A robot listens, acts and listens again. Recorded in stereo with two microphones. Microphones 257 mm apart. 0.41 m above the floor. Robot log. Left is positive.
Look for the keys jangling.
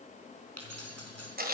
note: The keys jangling: about 75° right or 105° right.
cmd yaw -75
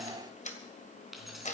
end: Facing the keys jangling, 2 to 4 m away.